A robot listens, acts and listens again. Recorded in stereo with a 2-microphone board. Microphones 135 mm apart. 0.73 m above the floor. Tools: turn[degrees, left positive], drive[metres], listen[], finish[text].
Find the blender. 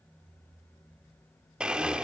Action: turn[-30]
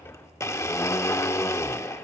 Thought: So it is at 20° left.
Action: turn[20]
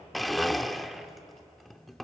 Action: finish[Found it: a blender, straight ahead, under 1 m away.]